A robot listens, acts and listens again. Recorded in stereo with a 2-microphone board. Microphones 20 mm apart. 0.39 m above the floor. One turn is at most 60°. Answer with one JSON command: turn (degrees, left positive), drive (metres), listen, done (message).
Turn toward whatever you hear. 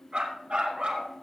{"turn": -60}
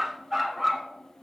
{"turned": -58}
{"turn": -10}
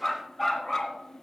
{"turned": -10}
{"done": "Facing the dog barking."}